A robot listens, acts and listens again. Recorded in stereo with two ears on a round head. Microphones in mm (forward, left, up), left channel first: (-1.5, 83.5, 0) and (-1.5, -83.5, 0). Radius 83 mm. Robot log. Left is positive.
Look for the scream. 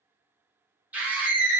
cmd yaw -30
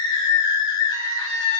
note: So it is at 20° left.
cmd yaw +20
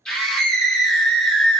end: Facing the scream.